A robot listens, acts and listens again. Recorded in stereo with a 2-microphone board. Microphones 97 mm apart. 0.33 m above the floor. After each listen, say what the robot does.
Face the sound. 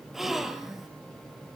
Turn 30° right.
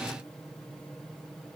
Keep listening.
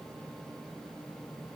I heard a gasp, but can't make it out now. It was about 25° left or 145° right.